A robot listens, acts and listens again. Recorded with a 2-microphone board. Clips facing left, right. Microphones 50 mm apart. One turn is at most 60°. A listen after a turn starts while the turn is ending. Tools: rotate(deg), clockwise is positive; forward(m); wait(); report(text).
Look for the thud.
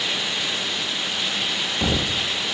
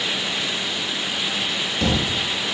rotate(-15)
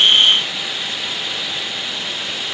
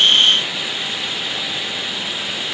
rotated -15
wait()
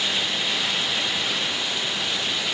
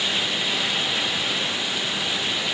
report("I heard a thud, but can't make it out now. It was about straight ahead or 150° left.")